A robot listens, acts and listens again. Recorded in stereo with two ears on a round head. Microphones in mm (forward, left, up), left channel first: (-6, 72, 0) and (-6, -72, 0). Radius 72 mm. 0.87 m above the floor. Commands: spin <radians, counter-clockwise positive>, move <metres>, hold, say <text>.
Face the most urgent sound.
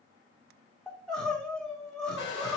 spin 0.52
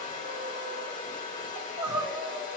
spin -0.44
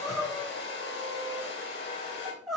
say Found it: crying, straight ahead, 2 to 4 m away.